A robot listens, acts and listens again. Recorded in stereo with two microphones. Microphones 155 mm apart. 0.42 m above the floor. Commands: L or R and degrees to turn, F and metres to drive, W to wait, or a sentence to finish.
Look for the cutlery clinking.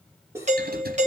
R15
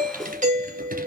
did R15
W
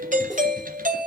W
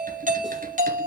I heard cutlery clinking, but can't make it out now. It was about straight ahead or 150° right.